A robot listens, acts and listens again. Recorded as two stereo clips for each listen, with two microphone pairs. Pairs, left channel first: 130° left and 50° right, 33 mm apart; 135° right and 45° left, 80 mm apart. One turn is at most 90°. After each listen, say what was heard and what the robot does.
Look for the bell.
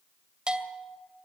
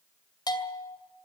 The bell: 110° right. Turn 90° right.
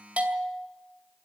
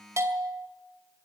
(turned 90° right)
Found it: a bell, straight ahead.